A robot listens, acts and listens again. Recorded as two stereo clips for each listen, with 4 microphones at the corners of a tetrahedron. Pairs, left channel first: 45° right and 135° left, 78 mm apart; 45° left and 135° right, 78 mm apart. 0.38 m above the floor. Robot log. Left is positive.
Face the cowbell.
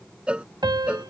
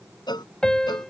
note: The cowbell: 60° left.
cmd yaw +60
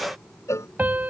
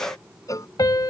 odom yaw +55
end: Facing the cowbell.